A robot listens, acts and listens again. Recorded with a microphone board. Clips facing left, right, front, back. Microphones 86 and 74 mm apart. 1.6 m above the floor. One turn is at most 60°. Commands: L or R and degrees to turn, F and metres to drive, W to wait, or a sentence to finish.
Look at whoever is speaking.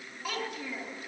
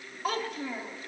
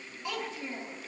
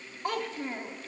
R60
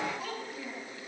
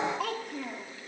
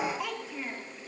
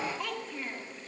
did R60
R60
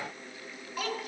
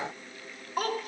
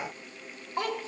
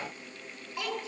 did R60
R50
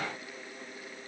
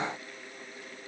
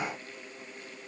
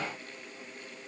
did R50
W
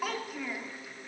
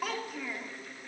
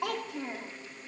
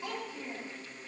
Facing the child speaking, 1 to 2 m away.